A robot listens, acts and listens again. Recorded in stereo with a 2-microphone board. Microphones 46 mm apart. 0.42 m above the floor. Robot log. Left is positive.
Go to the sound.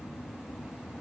cmd idle
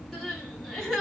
cmd yaw +30
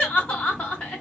note: So it is at 150° left.
cmd yaw +150
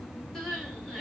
cmd fwd 1.0
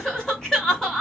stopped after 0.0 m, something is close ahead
end: Blocked. The crying is further on, straight ahead.